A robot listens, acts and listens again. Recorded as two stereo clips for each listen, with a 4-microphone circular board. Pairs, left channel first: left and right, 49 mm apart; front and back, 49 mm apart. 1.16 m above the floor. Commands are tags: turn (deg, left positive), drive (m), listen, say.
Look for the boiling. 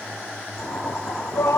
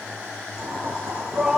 <turn deg="175"/>
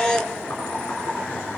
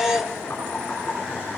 <turn deg="50"/>
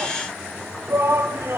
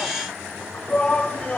<listen/>
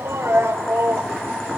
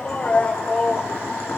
<turn deg="10"/>
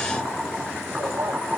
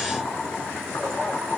<say>Found it: boiling, straight ahead.</say>